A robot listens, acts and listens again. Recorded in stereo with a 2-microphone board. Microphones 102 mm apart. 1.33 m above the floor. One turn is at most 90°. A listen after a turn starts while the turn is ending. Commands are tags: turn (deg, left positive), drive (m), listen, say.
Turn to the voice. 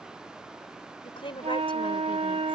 <turn deg="60"/>
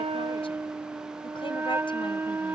<listen/>
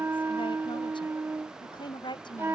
<turn deg="50"/>
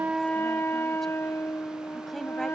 <listen/>
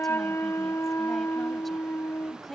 <say>Facing the woman speaking.</say>